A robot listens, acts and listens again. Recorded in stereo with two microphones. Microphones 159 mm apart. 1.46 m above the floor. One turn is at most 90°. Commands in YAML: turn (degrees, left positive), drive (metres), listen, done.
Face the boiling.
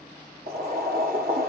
turn: -60
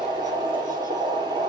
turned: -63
turn: -30
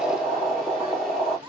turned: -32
done: "Found it: boiling, straight ahead, 1 to 2 m away."